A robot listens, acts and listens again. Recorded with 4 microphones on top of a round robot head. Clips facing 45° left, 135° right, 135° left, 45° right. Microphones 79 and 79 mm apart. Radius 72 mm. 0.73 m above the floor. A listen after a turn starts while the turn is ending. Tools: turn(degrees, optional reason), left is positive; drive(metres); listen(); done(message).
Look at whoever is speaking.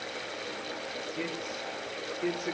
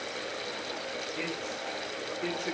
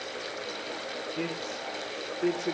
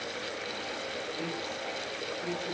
turn(degrees=130, reason="The man speaking: 130° left.")
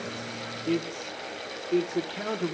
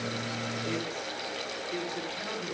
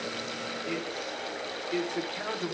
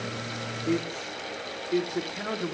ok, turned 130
turn(degrees=40, reason="The man speaking is now 40° left.")
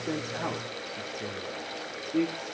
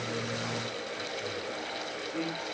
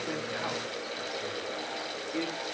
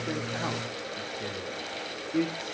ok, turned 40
turn(degrees=15, reason="The man speaking is now 15° left.")
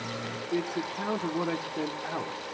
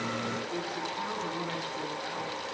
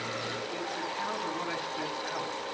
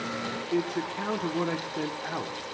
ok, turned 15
done("Facing the man speaking, 2 to 4 m away.")